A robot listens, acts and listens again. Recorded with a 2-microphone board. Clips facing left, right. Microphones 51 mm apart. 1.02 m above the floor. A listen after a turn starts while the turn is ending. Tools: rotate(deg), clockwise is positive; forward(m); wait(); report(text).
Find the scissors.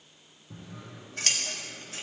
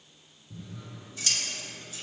rotate(-55)
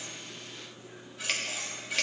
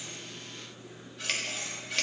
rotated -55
report("Found it: scissors, straight ahead.")